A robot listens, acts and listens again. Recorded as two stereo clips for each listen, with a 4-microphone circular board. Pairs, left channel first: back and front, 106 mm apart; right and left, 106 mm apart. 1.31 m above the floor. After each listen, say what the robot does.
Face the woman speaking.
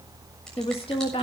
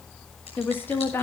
Turn 155° right.
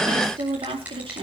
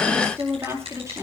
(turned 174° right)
Turn 30° left.
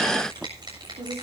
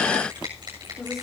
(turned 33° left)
Keep listening.
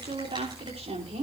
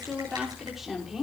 Found it: a woman speaking, straight ahead, over 4 m away.